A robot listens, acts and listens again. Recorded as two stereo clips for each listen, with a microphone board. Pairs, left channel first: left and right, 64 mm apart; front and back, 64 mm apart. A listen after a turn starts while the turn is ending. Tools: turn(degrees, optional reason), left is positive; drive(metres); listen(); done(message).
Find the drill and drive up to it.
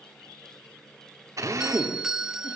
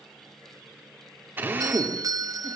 turn(degrees=-125, reason="The drill: 125° right.")
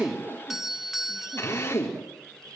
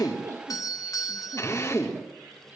turn(degrees=40, reason="The drill is now 40° left.")
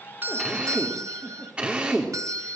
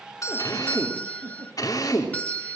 turn(degrees=-20, reason="The drill is now 20° right.")
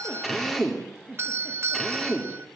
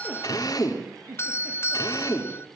drive(metres=1.0)
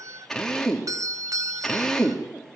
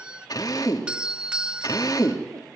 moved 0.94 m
drive(metres=1.0)
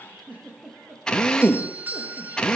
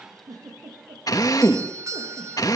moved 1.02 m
turn(degrees=10, reason="The drill is now 10° left.")
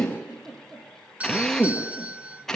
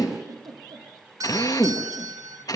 drive(metres=1.0)
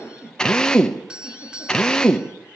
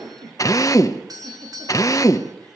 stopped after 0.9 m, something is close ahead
turn(degrees=10, reason="The drill is now 10° left.")
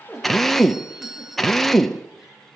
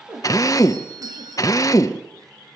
done("I am next to the drill.")